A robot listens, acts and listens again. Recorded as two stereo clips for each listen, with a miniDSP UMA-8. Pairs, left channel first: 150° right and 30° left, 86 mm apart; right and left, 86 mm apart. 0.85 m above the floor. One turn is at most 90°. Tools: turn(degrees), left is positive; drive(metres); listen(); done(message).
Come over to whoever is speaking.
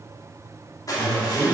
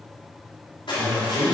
turn(degrees=90)
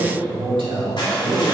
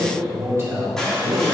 turn(degrees=35)
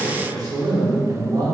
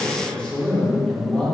turn(degrees=-10)
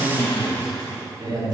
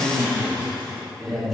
drive(metres=1.0)
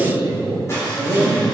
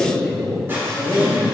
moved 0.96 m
turn(degrees=-10)
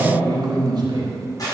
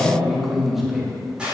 drive(metres=1.0)
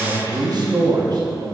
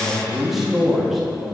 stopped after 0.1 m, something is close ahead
done("I am next to the man speaking.")